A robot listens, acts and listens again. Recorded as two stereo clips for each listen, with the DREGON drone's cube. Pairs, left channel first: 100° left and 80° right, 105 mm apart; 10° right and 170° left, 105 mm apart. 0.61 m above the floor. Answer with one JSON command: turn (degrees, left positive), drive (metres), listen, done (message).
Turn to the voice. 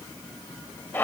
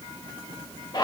{"listen": true}
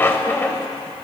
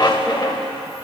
{"listen": true}
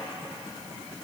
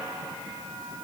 {"done": "I can't make out anyone speaking, only a squeak."}